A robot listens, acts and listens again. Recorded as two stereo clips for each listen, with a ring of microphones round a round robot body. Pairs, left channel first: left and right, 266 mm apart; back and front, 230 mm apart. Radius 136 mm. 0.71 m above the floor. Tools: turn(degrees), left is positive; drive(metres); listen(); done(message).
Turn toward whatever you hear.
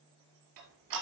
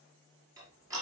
turn(degrees=-80)
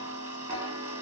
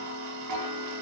turn(degrees=-10)
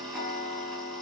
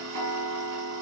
done("Found it: ticking, straight ahead.")